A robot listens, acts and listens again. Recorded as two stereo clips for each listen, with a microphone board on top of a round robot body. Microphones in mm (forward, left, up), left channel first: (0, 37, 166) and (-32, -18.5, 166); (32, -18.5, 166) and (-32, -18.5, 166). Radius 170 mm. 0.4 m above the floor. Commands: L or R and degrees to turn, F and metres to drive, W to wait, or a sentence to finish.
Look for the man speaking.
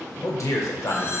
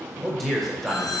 L90
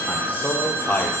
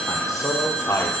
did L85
Found it: a man speaking, straight ahead, 1 to 2 m away.